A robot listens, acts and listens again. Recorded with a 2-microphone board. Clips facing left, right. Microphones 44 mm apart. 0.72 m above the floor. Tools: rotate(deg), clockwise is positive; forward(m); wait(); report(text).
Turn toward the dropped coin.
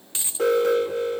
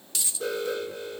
rotate(-25)
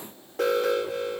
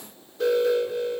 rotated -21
wait()
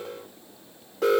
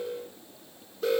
report("I heard a dropped coin, but can't make it out now. It was about 5° left or 130° left.")